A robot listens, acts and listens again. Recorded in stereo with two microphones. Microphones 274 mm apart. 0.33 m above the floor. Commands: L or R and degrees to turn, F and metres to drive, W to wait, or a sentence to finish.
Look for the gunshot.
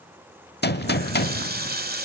L40
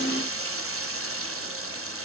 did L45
W
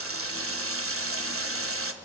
I heard a gunshot, but can't make it out now. It was about 5° right or 95° left.